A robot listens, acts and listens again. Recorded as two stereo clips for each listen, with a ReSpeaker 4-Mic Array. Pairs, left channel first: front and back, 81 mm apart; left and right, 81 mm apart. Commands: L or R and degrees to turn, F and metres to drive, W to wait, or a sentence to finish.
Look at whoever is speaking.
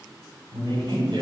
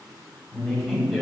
L180
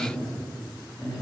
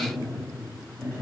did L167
L35
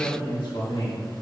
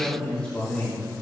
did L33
L20
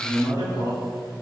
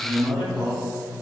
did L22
Facing the man speaking.